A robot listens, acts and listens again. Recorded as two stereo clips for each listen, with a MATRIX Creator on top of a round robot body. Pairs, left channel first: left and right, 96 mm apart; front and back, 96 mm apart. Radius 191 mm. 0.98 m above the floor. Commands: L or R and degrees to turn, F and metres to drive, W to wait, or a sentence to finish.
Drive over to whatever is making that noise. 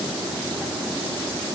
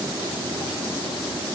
W
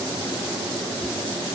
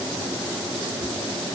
W
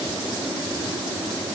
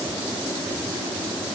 I can't make out anything to turn to.